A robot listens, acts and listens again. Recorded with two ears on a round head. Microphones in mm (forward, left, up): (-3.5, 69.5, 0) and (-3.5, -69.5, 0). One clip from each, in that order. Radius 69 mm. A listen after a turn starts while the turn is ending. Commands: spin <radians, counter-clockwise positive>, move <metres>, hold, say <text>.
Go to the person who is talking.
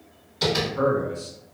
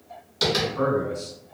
spin 0.52
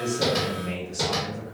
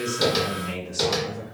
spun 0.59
spin -0.61
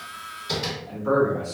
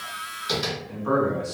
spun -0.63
move 1.0
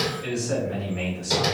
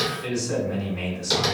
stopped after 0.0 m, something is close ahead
say Blocked. The man speaking is further on, straight ahead.